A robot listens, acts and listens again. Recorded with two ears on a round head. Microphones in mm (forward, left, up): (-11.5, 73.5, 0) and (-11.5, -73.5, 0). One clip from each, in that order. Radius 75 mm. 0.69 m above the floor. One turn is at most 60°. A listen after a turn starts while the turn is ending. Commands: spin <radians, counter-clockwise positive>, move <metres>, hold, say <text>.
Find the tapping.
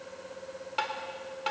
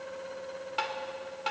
spin -0.52
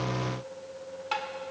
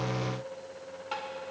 spin 0.44
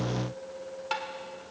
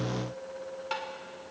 say Facing the tapping, 1 to 2 m away.